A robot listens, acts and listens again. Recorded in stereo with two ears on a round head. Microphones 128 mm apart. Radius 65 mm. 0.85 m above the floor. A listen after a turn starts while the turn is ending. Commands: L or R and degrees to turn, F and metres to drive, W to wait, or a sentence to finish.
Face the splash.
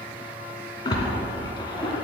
L30
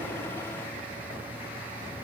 W
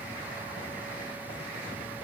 I heard a splash, but can't make it out now. It was about straight ahead or 120° left.